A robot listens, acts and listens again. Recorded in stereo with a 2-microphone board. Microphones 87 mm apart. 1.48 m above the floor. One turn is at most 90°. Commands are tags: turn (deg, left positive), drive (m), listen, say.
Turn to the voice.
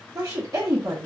<turn deg="-35"/>
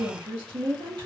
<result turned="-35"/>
<turn deg="-90"/>
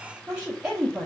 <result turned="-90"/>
<turn deg="-10"/>
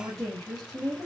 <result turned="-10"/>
<say>Found it: a woman speaking, straight ahead.</say>